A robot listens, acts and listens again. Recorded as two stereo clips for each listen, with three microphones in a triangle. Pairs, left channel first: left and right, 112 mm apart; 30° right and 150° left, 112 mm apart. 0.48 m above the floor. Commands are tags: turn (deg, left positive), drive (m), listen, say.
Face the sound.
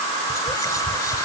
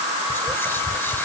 <turn deg="35"/>
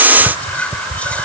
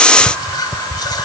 <turn deg="15"/>
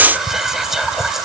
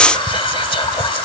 <say>Found it: whispering, straight ahead.</say>